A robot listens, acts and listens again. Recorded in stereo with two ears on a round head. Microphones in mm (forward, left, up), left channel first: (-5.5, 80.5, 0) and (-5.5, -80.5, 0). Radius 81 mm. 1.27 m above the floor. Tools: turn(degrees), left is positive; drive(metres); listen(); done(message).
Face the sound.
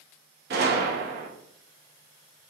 turn(degrees=-55)
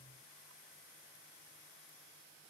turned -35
listen()
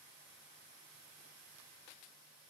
done("I heard a gunshot, but can't make it out now. It was about 20° right or 90° right.")